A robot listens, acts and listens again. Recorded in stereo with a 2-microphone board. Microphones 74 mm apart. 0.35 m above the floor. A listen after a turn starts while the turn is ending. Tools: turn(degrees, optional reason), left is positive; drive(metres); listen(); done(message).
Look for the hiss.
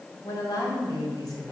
listen()
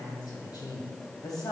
listen()
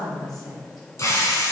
turn(degrees=40, reason="The hiss: about 40° left or 140° left.")
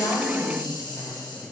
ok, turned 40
listen()
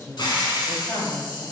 turn(degrees=100, reason="So it is at 100° left.")
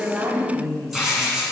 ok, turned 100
done("Found it: a hiss, straight ahead.")